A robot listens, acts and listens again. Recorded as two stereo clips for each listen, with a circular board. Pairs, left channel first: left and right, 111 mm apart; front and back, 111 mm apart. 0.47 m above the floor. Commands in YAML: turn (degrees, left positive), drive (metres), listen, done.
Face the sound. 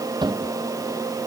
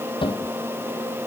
turn: -40
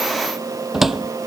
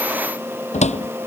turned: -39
done: "Found it: a cupboard door, straight ahead."